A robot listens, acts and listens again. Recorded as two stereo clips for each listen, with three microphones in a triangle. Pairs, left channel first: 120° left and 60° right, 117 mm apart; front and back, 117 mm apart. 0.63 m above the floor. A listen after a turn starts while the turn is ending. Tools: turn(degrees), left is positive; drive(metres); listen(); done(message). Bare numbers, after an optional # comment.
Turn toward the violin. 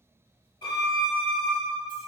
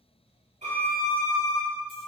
# The violin: 170° left.
turn(170)
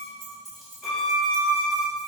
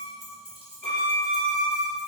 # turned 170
# The violin is now 35° left.
turn(35)
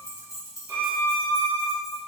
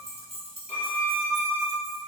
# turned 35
done("Facing the violin, under 1 m away.")